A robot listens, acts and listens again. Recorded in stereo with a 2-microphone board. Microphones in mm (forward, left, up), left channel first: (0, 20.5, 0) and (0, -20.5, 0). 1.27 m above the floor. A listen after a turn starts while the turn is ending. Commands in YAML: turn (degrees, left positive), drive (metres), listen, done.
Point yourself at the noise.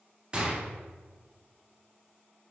turn: -25
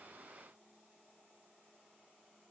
listen: true
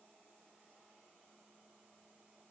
done: "I heard a gunshot, but can't make it out now. It was about straight ahead or 130° right."